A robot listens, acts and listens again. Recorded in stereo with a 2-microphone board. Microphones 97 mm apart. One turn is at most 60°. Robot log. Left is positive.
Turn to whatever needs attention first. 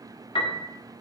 cmd idle
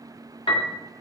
cmd idle
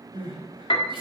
note: The crying: about 65° right or 115° right.
cmd yaw -60
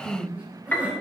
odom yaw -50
note: So it is at 15° right.
cmd yaw -15
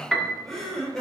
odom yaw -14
end: Facing the crying, over 4 m away.